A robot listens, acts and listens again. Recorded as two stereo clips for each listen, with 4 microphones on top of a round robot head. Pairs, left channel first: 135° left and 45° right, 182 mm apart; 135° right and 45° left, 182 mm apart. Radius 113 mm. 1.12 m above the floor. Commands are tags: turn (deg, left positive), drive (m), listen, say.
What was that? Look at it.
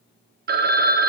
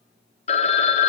<turn deg="-80"/>
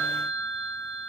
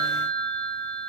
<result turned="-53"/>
<turn deg="-25"/>
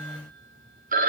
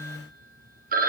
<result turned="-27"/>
<say>Facing the phone ringing, 1 to 2 m away.</say>